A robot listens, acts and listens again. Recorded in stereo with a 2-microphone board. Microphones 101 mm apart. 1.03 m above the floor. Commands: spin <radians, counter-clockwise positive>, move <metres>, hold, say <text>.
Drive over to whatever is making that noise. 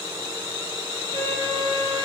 spin -1.31
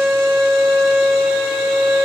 move 1.0
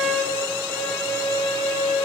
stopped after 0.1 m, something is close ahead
say Something is in my way. I am facing the violin but have not reached it.